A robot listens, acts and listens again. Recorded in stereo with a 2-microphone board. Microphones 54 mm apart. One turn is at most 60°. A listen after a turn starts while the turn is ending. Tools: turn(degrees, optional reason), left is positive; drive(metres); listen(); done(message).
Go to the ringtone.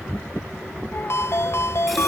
turn(degrees=55, reason="The ringtone: about 55° left or 125° left.")
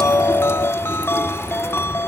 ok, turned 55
turn(degrees=60, reason="So it is at 60° left.")
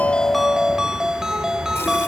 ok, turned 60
turn(degrees=-10, reason="The ringtone is now 10° right.")
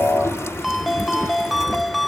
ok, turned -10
drive(metres=1.0)
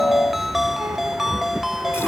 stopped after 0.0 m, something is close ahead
done("Blocked. The ringtone is further on, straight ahead.")